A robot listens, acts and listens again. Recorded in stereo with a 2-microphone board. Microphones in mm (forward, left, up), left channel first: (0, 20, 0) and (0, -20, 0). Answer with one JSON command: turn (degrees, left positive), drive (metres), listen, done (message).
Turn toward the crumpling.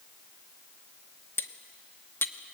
{"listen": true}
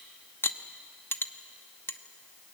{"listen": true}
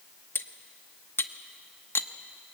{"done": "I can't make out crumpling, only cutlery clinking."}